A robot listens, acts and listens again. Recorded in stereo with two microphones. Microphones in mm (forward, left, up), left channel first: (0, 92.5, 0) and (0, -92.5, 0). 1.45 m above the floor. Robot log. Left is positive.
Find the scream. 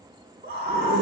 cmd yaw -90
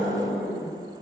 end: Found it: a scream, straight ahead, 2 to 4 m away.